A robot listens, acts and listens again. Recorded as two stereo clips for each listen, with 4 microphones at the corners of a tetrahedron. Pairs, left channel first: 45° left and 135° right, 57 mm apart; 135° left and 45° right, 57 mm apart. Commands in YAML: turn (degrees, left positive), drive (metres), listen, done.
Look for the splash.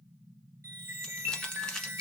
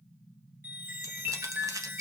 listen: true
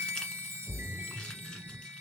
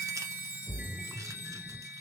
turn: 80
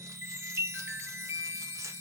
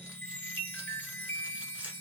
done: "Facing where the splash came from. I can't hear it now."